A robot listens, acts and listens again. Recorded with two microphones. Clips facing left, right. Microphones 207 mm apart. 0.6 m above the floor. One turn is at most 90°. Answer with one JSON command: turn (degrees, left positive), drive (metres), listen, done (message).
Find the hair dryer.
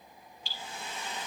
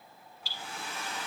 {"turn": -90}
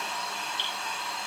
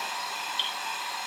{"done": "Found it: a hair dryer, straight ahead, 1 to 2 m away."}